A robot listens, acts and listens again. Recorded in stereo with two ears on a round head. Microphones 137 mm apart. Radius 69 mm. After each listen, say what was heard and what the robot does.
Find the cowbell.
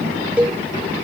Turn 30° right.
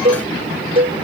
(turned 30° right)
So it is at 140° right. Turn 140° right.
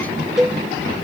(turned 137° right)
Facing the cowbell.